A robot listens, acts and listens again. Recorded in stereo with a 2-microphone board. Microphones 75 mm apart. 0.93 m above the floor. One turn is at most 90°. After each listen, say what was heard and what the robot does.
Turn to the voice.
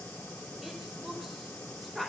Turn 30° left.
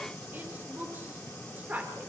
So it is at 20° right. Turn 20° right.
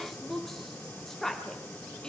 The woman speaking is now 10° left. Turn 10° left.
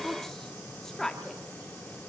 Facing the woman speaking, 2 to 4 m away.